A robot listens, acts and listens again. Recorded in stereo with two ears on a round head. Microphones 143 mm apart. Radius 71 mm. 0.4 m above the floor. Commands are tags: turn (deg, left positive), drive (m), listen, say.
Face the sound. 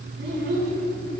<turn deg="-90"/>
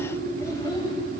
<turn deg="30"/>
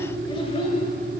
<turn deg="40"/>
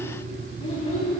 <turn deg="40"/>
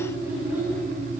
<turn deg="-10"/>
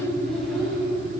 <say>Facing the child speaking, 1 to 2 m away.</say>